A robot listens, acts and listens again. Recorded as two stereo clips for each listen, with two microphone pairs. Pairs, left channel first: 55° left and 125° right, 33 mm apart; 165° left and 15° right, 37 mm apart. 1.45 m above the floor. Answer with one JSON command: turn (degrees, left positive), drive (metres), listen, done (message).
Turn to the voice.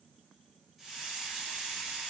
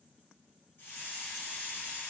{"listen": true}
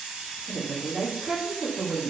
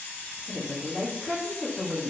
{"turn": -155}
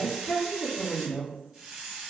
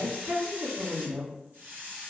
{"done": "Facing the woman speaking, 1 to 2 m away."}